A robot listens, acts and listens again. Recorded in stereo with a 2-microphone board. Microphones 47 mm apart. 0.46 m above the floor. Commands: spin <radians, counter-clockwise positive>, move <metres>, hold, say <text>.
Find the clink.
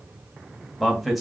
hold
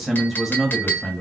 spin 0.79
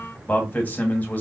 hold
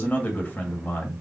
hold
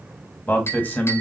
spin 1.48
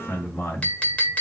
spin 0.61
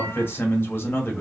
hold
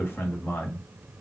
hold
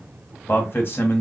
say Facing where the clink came from. I can't hear it now.